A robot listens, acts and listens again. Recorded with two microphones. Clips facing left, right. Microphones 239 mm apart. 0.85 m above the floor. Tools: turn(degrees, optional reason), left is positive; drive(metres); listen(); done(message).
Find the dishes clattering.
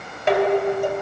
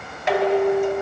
turn(degrees=30, reason="The dishes clattering: about 30° left or 150° left.")
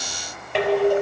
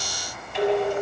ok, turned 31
turn(degrees=115, reason="So it is at 115° left.")
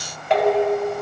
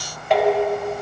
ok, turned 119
done("Facing the dishes clattering.")